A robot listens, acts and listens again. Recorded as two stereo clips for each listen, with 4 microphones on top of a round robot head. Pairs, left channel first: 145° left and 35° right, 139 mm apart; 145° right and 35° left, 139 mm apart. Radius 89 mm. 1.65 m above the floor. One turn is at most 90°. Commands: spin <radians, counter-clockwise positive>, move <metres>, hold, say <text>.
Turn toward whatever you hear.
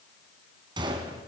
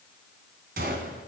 spin 0.35
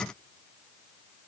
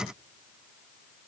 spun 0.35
say I heard a gunshot from this way, but can't make it out now.